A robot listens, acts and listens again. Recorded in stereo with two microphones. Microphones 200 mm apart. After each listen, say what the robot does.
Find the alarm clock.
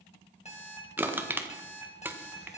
Turn 35° left.
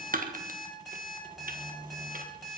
Facing the alarm clock.